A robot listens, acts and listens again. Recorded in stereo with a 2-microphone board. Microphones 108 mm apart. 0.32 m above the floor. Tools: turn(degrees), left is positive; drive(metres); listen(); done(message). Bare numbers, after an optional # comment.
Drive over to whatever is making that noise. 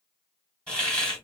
turn(30)
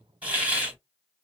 # So it is at 15° right.
turn(-15)
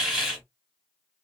drive(1.0)
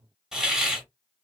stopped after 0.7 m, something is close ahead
# The hiss is now 10° right.
turn(-10)
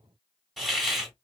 done("Arrived at the hiss, straight ahead.")